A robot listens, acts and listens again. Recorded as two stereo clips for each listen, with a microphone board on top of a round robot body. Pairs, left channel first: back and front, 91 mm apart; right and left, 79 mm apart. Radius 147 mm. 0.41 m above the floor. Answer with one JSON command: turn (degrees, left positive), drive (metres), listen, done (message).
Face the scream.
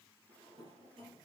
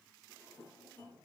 {"listen": true}
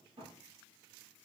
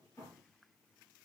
{"listen": true}
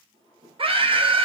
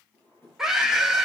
{"done": "Facing the scream, 2 to 4 m away."}